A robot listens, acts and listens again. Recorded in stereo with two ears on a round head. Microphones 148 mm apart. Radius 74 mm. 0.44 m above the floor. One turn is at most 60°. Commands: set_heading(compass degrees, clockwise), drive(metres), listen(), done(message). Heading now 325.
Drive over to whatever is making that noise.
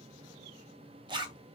set_heading(355)
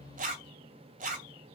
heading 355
set_heading(55)
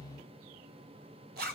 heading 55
set_heading(115)
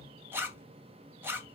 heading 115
set_heading(130)
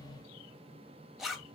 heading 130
drive(1.0)
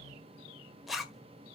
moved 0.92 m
drive(1.0)
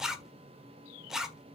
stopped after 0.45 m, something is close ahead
done("I am next to the zipper.")